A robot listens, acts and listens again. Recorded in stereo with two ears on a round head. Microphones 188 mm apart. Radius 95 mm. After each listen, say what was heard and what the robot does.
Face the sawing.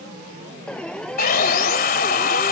The sawing: about 45° left or 135° left. Turn 45° left.
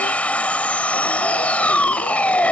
So it is at 10° left. Turn 10° left.
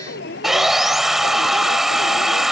Found it: sawing, straight ahead.